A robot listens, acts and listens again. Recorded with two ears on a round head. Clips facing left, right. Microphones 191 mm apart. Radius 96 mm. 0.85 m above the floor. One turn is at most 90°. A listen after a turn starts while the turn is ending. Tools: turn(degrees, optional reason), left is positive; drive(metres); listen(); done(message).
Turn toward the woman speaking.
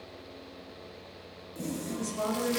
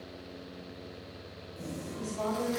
turn(degrees=65, reason="The woman speaking: about 65° left or 115° left.")
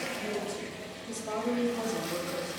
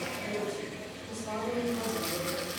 turn(degrees=50, reason="So it is at 50° left.")
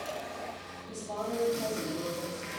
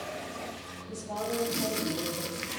done("Found it: a woman speaking, straight ahead, over 4 m away.")